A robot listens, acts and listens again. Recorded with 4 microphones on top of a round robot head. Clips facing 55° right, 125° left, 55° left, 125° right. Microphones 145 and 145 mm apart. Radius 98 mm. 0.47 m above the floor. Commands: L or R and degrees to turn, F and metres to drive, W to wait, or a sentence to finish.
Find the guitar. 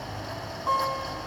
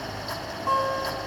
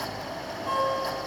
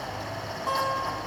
R155
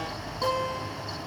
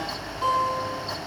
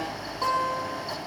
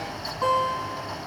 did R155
R20
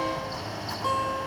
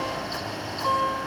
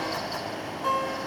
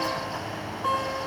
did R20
Found it: a guitar, straight ahead, 2 to 4 m away.